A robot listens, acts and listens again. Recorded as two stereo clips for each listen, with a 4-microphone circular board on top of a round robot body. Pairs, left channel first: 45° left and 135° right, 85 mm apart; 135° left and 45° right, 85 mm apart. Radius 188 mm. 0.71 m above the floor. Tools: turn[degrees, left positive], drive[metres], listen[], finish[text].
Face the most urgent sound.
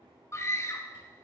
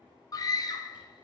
Thought: The scream: 100° left.
Action: turn[100]
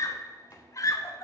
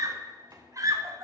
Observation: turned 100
Action: finish[Found it: a scream, straight ahead.]